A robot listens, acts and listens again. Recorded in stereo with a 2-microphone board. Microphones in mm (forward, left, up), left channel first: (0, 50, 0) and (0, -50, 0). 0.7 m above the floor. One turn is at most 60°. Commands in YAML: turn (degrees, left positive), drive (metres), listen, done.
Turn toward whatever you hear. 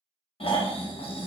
turn: 60
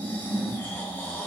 turn: 20
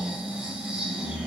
turn: -10
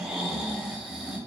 done: "Facing the snoring, under 1 m away."